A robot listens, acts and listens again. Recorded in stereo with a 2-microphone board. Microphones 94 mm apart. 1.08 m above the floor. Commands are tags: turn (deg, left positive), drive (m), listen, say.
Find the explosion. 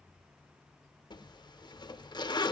<listen/>
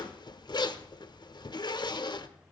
<listen/>
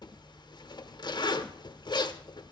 <say>I can't make out an explosion to turn to.</say>